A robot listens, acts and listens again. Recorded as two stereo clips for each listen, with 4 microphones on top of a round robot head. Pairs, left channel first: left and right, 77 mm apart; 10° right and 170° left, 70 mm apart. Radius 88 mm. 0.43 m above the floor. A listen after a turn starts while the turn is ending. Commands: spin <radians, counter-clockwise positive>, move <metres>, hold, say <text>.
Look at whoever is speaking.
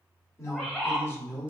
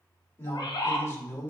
spin 0.52
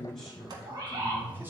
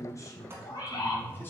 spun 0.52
hold
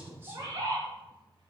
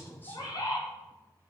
hold
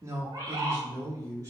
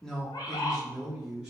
spin -2.01
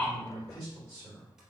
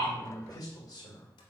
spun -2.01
spin -0.26
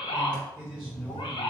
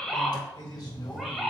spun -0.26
say Found it: a man speaking, straight ahead, 1 to 2 m away.